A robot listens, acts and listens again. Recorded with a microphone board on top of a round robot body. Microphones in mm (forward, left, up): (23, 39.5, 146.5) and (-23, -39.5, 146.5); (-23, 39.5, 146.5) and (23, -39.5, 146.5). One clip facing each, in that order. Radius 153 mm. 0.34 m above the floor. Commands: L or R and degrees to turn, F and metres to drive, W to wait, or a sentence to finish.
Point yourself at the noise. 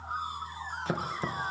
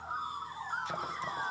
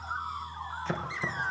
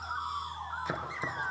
L20
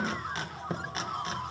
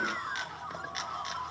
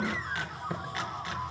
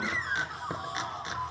L10
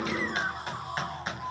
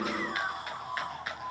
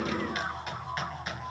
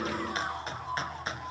Facing the chopping.